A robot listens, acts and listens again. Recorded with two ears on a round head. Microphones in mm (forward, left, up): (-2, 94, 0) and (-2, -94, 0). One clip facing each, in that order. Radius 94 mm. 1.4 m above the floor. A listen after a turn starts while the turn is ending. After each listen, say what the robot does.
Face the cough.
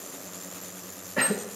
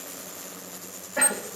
Turn 45° left.
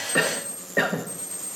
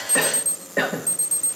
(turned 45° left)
Facing the cough, 1 to 2 m away.